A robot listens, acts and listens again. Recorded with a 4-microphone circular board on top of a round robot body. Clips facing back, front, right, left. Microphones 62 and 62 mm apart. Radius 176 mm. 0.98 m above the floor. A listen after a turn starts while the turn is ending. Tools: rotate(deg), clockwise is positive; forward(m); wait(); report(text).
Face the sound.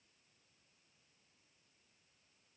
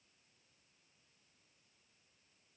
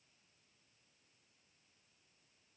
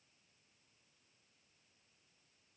wait()
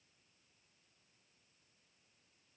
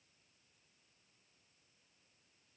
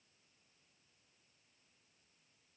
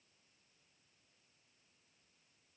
wait()
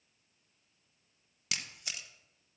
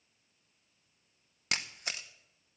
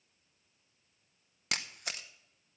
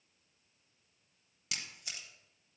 rotate(50)
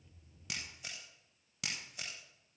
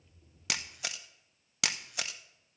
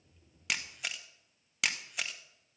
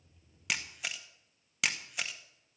report("Found it: a camera shutter, straight ahead, under 1 m away.")